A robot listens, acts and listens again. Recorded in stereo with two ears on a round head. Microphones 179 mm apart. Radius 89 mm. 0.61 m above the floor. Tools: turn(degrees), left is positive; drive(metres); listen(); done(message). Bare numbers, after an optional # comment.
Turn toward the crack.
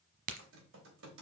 # The crack: about 45° right or 135° right.
turn(-45)
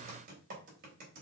listen()
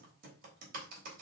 done("I heard a crack, but can't make it out now. It was about straight ahead or 90° right.")